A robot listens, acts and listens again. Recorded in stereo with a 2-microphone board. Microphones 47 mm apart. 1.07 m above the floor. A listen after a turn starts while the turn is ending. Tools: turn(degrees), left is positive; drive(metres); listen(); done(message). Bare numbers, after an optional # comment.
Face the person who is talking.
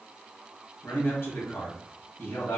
# The man speaking: about 55° left or 125° left.
turn(55)
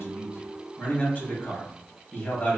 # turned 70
# So it is at 40° left.
turn(40)
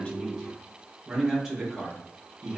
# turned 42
done("Facing the man speaking.")